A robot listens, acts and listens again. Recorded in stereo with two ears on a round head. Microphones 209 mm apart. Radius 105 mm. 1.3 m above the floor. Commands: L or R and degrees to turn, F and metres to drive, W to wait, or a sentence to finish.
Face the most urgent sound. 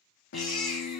L30
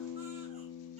W
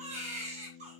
R30
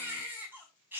R10
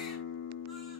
W
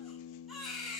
Facing the baby crying, over 4 m away.